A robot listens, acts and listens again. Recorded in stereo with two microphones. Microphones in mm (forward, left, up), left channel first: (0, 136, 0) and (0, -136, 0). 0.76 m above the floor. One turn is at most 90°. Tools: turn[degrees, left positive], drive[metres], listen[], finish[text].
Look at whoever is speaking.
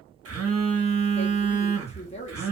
Thought: The woman speaking: about 25° left or 155° left.
Action: turn[25]
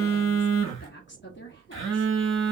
Thought: So it is at 130° left.
Action: turn[90]
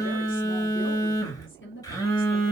Thought: The woman speaking is now 55° left.
Action: turn[55]
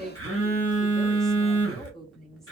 Action: finish[Facing the woman speaking.]